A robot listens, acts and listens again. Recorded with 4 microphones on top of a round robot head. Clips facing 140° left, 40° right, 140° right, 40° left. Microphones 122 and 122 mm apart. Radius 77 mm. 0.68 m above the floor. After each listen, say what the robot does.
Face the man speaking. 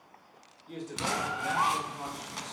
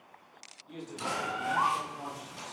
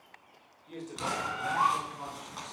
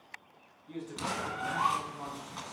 Turn 160° left.
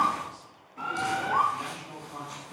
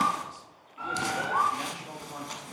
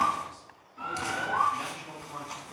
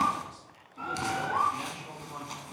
Turn 30° right.
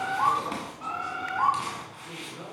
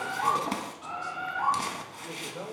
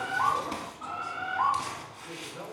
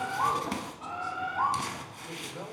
Turn 20° right.
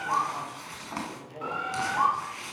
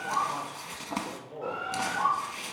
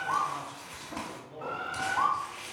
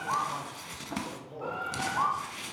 Facing the man speaking, 2 to 4 m away.